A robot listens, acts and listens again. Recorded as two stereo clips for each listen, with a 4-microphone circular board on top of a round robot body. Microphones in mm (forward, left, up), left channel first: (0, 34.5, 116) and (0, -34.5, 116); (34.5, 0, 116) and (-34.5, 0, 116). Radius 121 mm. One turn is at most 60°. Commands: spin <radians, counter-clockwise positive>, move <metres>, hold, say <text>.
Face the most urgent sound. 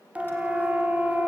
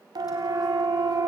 spin -1.05
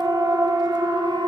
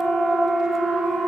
spin -1.05
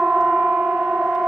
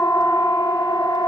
spin -0.17
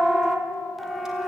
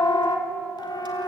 say Facing the siren.